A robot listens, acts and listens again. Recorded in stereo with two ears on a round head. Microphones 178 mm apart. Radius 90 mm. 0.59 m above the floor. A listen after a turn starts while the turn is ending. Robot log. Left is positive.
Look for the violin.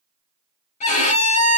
note: The violin: about 35° left or 145° left.
cmd yaw +35
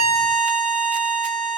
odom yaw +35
end: Facing the violin, 1 to 2 m away.